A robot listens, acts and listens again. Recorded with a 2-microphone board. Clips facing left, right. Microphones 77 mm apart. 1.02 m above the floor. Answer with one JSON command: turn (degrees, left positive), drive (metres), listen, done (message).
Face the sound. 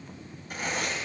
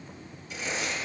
{"turn": 55}
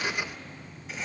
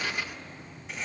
{"done": "Facing the writing, 2 to 4 m away."}